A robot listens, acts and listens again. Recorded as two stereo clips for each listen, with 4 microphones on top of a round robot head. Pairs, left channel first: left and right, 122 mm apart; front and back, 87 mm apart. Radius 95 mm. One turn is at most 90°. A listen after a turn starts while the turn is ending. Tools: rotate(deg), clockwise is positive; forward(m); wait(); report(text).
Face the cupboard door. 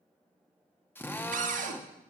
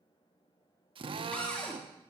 rotate(80)
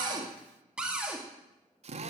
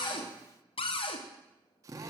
report("Facing the cupboard door, 2 to 4 m away.")